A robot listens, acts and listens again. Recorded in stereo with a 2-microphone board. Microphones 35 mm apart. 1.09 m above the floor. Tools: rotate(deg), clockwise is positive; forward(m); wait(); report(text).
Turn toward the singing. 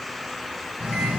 rotate(45)
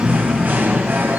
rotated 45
rotate(85)
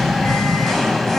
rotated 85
rotate(-10)
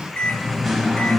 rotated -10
report("Found it: singing, straight ahead, 1 to 2 m away.")